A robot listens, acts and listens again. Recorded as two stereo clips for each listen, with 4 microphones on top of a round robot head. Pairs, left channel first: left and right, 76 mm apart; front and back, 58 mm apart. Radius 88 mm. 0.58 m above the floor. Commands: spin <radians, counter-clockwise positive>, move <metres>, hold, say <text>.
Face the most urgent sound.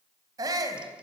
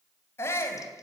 spin -0.87
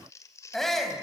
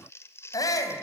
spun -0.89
say Facing the shout.